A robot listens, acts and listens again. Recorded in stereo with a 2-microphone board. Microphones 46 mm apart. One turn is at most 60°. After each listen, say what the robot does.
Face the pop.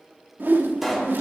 Turn 30° left.
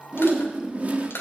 Keep listening.
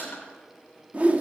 I heard a pop, but can't make it out now. It was about 30° right or 150° left.